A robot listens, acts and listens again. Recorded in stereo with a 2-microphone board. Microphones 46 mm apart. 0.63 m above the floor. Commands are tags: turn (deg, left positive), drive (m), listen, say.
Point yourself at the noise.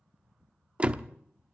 <turn deg="-30"/>
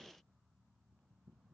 <listen/>
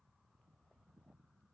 <say>I heard a door slam, but can't make it out now. It was about straight ahead or 120° right.</say>